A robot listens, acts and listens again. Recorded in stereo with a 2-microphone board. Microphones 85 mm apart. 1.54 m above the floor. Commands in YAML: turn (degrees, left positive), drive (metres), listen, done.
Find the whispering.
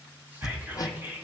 turn: -25
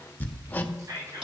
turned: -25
turn: -130
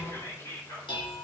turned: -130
turn: 35
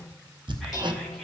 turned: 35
listen: true
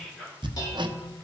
done: "Facing the whispering."